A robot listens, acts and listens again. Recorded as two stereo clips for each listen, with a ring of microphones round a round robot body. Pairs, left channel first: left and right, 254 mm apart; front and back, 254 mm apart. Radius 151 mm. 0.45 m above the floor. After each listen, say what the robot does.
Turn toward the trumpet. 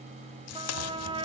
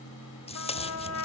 Turn 20° right.
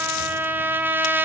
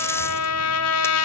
Turn 10° right.
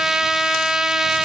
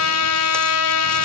Found it: a trumpet, straight ahead, 2 to 4 m away.